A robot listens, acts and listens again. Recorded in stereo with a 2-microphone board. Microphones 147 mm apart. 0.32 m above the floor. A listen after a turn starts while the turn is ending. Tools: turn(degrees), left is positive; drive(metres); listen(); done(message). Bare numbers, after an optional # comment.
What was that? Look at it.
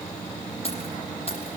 # The keys jangling: about 45° left or 135° left.
turn(45)
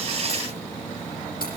listen()
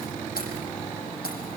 # So it is at 95° left.
turn(95)
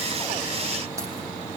listen()
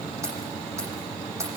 # The keys jangling is now 20° right.
turn(-20)
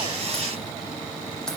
listen()
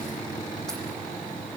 listen()
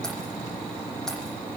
done("I heard keys jangling from this way, but can't make it out now.")